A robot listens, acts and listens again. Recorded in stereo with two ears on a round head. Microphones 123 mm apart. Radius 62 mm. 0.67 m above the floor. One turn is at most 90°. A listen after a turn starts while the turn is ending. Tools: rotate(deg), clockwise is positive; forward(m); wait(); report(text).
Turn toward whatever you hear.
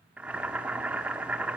rotate(30)
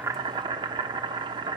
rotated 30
rotate(90)
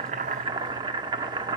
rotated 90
rotate(40)
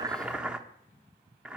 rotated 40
rotate(10)
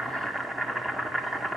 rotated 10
report("Found it: boiling, straight ahead.")